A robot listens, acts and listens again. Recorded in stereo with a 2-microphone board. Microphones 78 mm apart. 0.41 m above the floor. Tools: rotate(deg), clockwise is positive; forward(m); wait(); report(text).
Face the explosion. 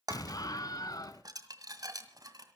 rotate(-55)
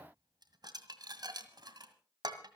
wait()
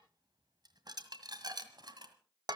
report("I heard an explosion, but can't make it out now. It was about straight ahead or 70° left.")